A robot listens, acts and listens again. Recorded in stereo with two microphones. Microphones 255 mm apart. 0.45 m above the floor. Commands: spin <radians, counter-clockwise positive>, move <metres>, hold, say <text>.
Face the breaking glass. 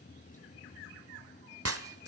spin -1.13
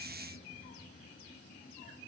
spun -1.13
hold
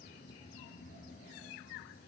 say I heard breaking glass, but can't make it out now. It was about straight ahead or 50° right.